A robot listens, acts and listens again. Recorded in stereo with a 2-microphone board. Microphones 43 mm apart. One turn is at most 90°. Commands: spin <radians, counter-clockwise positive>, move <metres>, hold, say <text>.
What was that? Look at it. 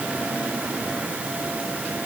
hold
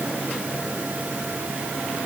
hold
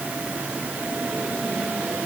say I can't make out anything.